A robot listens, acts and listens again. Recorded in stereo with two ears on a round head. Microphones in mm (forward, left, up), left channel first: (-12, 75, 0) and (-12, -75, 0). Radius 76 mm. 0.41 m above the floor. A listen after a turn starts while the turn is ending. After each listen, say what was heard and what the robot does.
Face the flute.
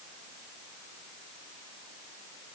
Keep listening.
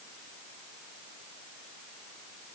Keep listening.
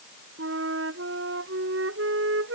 Turn 90° right.
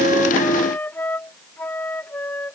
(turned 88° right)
So it is at 10° left. Turn 10° left.
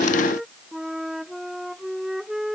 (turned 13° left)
Facing the flute.